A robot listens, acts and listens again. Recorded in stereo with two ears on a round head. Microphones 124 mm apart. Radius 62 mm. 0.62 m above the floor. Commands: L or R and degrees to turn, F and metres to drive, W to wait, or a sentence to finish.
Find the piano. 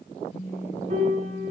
R50
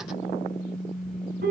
R75
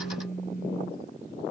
W
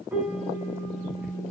R10
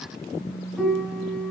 Found it: a piano, straight ahead.